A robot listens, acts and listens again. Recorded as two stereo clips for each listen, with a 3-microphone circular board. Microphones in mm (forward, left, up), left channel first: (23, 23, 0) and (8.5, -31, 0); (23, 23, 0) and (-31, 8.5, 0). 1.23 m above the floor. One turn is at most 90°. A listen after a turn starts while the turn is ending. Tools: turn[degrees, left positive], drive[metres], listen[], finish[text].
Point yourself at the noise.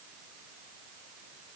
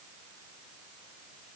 Action: listen[]
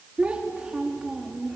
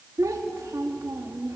Thought: The child speaking: 170° left.
Action: turn[90]
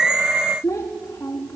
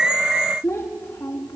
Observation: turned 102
Thought: The child speaking is now 40° left.
Action: turn[40]
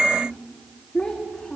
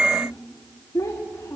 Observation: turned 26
Action: finish[Facing the child speaking, 1 to 2 m away.]